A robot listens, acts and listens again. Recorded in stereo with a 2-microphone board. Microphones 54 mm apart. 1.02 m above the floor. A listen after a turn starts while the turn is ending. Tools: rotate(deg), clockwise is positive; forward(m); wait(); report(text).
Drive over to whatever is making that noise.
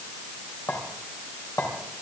rotate(-70)
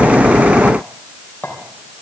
rotate(-35)
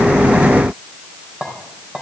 rotate(15)
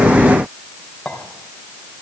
forward(1.0)
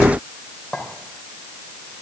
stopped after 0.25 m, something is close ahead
report("Blocked. The clink is further on, straight ahead.")